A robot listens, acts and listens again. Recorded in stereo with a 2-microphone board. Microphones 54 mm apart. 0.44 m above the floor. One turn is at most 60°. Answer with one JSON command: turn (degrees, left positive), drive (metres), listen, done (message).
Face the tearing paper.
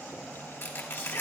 {"turn": 55}
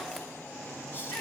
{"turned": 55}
{"listen": true}
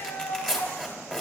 {"turn": 10}
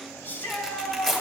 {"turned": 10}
{"done": "Found it: tearing paper, straight ahead, 2 to 4 m away."}